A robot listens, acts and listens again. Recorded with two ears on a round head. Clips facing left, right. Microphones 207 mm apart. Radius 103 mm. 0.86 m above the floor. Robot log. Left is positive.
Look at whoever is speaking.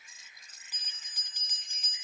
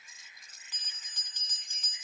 cmd idle
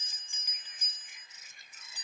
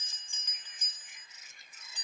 cmd idle
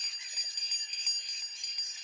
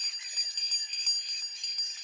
end: I can't make out anyone speaking to turn to.